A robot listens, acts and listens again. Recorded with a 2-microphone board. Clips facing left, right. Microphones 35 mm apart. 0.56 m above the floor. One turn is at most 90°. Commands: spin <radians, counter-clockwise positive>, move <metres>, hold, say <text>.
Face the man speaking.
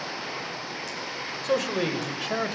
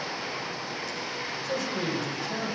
spin 1.22
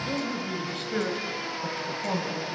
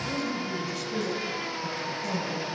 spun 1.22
spin 0.79
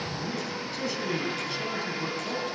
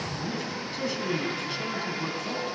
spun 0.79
say Found it: a man speaking, straight ahead, over 4 m away.